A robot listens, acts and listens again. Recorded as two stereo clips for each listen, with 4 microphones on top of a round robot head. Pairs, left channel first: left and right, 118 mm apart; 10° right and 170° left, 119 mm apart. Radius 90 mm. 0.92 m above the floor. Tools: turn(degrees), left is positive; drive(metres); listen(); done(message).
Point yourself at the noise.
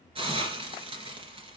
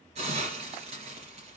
turn(degrees=-130)
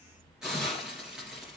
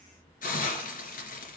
done("Found it: a hiss, straight ahead.")